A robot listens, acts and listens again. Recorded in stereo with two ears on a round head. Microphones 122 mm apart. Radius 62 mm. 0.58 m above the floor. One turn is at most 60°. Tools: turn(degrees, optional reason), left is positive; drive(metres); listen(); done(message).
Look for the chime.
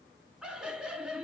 listen()
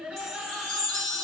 turn(degrees=30)
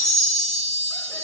turn(degrees=-30, reason="So it is at 30° right.")
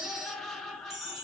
done("Facing the chime, 1 to 2 m away.")